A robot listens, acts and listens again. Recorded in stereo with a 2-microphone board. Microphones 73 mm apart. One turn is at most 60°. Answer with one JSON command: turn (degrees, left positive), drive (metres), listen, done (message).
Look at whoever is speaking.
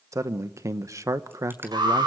{"turn": -45}
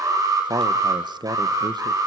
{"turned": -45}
{"turn": -60}
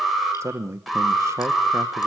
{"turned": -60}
{"turn": -40}
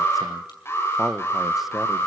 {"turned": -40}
{"done": "Facing the man speaking."}